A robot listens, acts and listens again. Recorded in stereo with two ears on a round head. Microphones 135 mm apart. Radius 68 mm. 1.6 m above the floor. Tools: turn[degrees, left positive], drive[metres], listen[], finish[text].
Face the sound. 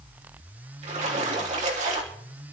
Thought: The splash: about 45° right or 135° right.
Action: turn[-45]
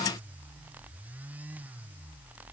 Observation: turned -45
Action: listen[]
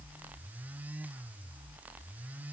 Action: finish[I heard a splash, but can't make it out now. It was about straight ahead or 90° right.]